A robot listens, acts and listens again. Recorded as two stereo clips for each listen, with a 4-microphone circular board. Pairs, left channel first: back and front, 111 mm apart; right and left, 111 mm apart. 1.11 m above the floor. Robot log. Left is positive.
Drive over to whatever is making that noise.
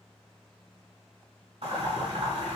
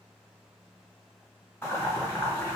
note: The boiling: 20° right.
cmd yaw -20
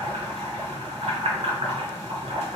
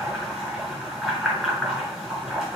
cmd fwd 1.0
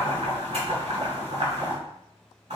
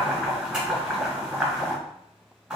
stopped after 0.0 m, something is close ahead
note: The boiling is now 10° left.
cmd yaw +10
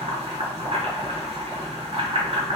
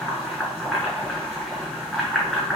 end: Blocked. The boiling is further on, straight ahead.